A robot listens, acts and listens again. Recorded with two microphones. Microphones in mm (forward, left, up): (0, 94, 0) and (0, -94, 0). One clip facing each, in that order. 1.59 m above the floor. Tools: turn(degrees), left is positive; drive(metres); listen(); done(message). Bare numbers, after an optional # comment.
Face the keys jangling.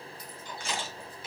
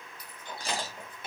# The keys jangling: about 60° right or 120° right.
turn(-60)
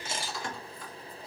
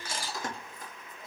# So it is at 45° right.
turn(-45)
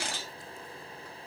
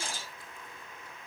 listen()
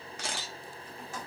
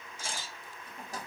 # The keys jangling is now 40° right.
turn(-40)
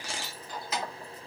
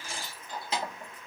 # The keys jangling is now 30° right.
turn(-30)
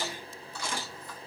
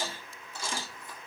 # The keys jangling is now 20° right.
turn(-20)
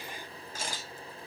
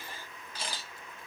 listen()
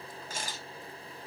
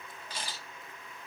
listen()
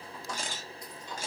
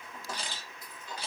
done("Found it: keys jangling, straight ahead.")